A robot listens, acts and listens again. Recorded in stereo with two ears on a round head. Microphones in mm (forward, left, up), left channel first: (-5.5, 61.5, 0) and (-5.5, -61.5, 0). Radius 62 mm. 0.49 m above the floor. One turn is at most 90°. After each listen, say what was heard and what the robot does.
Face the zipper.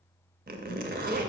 The zipper: about 70° right or 110° right. Turn 70° right.
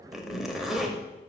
Facing the zipper, under 1 m away.